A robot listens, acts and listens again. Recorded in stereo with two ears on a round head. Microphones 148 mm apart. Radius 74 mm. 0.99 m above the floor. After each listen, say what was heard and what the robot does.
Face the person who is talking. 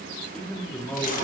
Turn 30° left.
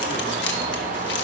Keep listening.
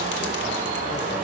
Keep listening.
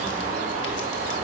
I heard a man speaking, but can't make it out now. It was about 20° right or 140° left.